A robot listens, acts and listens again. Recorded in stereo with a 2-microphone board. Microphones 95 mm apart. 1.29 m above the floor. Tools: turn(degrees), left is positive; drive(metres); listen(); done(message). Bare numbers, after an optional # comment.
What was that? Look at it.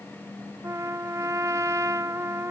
# The trumpet: about 30° right or 150° right.
turn(-30)
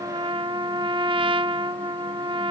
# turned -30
# So it is at 120° right.
turn(-120)
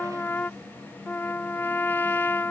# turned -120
# The trumpet is now 20° left.
turn(20)
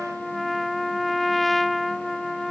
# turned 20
done("Found it: a trumpet, straight ahead.")